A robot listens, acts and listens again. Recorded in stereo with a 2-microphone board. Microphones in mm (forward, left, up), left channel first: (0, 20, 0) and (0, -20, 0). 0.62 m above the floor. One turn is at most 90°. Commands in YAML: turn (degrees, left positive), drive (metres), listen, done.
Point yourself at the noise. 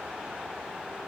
listen: true
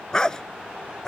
turn: 30
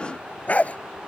turn: 90
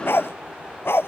turn: 80
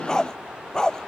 turn: 20
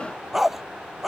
done: "Facing the dog barking."